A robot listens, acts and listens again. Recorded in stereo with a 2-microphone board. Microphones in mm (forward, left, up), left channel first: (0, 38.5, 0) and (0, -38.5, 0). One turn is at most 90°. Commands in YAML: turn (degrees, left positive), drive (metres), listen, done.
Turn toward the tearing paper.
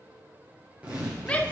turn: -20
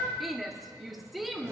listen: true
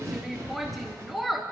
turn: -90
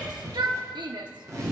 turn: -50
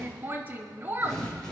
turn: 10
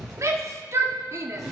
done: "Facing the tearing paper, over 4 m away."